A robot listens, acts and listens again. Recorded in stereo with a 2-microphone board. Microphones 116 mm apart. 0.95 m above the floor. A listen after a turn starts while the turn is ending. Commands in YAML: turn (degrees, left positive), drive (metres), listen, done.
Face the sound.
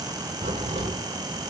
turn: -90
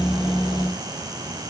done: "I heard a crack from this way, but can't make it out now."